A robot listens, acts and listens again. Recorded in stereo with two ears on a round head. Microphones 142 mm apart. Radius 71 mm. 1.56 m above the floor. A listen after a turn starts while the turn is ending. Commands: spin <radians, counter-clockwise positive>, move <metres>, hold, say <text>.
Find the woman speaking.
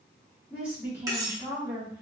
spin -0.35
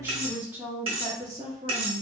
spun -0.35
spin -0.61
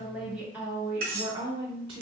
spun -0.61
spin -0.52
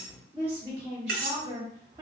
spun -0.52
spin -0.35
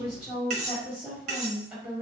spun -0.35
say Found it: a woman speaking, straight ahead, 1 to 2 m away.